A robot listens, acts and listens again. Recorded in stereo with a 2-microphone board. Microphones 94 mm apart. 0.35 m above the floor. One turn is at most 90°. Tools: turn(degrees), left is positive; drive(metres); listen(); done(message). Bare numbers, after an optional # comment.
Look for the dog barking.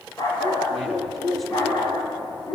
# The dog barking: about 40° left or 140° left.
turn(40)
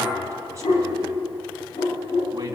# So it is at 100° left.
turn(90)
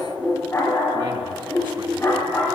# The dog barking is now 20° left.
turn(20)
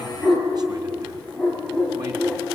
# The dog barking is now 10° left.
turn(10)
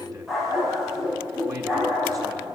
done("Facing the dog barking, over 4 m away.")